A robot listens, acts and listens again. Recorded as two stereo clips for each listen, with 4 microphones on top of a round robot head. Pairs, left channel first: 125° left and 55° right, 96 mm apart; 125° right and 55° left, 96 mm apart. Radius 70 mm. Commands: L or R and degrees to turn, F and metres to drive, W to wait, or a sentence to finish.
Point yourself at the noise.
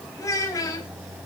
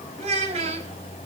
L70
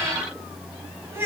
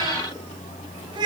L10
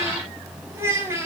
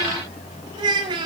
L10
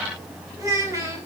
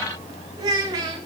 Facing the child speaking, over 4 m away.